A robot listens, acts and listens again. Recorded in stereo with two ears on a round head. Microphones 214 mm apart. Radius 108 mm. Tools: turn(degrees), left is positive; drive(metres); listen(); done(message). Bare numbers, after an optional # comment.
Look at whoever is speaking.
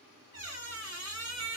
listen()
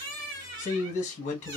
# The man speaking: about 30° left or 150° left.
turn(30)
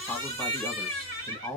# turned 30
done("Facing the man speaking.")